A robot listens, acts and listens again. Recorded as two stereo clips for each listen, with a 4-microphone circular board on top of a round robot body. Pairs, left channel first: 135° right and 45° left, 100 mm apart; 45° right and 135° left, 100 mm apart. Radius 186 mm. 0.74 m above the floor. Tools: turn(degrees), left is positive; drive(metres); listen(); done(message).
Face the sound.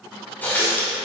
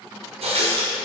turn(degrees=150)
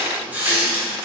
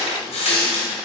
turn(degrees=-30)
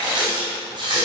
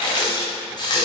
done("Found it: a running tap, straight ahead.")